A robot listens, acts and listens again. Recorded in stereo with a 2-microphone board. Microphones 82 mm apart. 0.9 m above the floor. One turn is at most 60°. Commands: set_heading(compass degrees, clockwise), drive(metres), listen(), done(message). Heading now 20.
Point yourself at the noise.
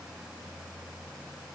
listen()
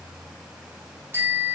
set_heading(50)
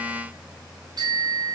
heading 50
set_heading(110)
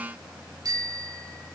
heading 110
set_heading(160)
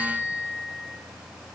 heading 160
set_heading(150)
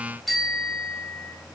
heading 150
done("Found it: a bicycle bell, straight ahead.")